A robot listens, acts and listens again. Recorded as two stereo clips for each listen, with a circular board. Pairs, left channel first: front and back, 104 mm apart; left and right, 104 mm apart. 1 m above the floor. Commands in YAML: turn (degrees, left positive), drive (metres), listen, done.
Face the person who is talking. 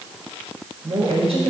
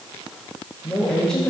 turn: 175
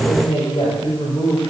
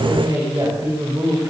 turn: -35
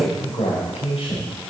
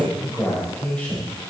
turn: 15
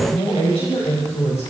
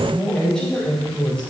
turn: 10
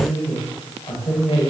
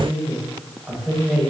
done: "Facing the woman speaking."